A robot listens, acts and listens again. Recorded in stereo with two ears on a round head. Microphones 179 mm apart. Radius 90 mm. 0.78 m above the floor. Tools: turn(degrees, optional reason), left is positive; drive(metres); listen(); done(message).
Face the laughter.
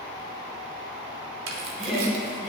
turn(degrees=30)
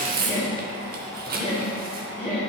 turn(degrees=135, reason="So it is at 135° left.")
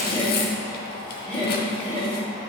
turn(degrees=25, reason="The laughter is now 25° left.")
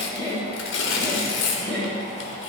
done("Found it: laughter, straight ahead.")